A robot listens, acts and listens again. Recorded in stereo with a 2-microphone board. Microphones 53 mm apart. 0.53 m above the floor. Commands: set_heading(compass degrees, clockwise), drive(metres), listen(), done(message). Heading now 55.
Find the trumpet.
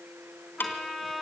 set_heading(25)
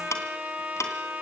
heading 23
set_heading(53)
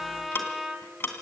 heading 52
done("Facing the trumpet.")